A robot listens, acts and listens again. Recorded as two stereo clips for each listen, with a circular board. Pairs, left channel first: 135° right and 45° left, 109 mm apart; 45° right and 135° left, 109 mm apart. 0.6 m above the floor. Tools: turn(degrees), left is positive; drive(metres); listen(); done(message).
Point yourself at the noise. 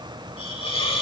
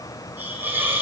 turn(degrees=-155)
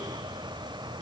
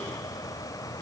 listen()
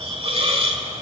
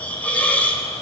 turn(degrees=30)
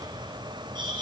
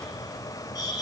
done("Found it: a hiss, straight ahead.")